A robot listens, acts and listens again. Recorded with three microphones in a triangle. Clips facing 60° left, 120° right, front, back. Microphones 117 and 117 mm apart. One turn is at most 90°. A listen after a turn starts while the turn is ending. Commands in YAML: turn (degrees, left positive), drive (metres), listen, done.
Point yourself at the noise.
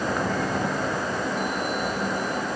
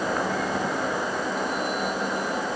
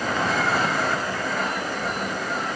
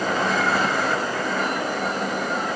listen: true
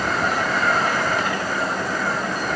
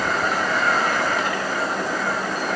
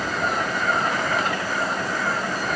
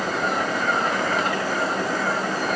listen: true
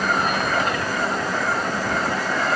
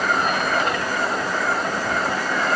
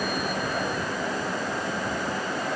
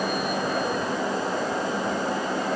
done: "I can't make out anything to turn to."